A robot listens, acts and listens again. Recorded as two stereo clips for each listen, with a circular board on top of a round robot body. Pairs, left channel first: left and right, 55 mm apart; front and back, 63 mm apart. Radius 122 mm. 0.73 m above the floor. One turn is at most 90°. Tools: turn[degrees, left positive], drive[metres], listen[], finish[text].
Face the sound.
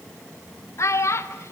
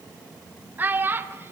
Thought: The child speaking: 125° left.
Action: turn[90]
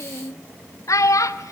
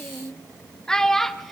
Thought: The child speaking is now 85° left.
Action: turn[85]
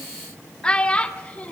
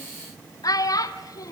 Thought: The child speaking is now 20° left.
Action: turn[20]
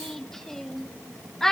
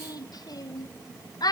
Thought: The child speaking is now 10° left.
Action: turn[10]
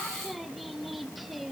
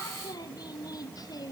Action: listen[]
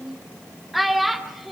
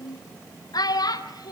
Action: finish[Facing the child speaking, 1 to 2 m away.]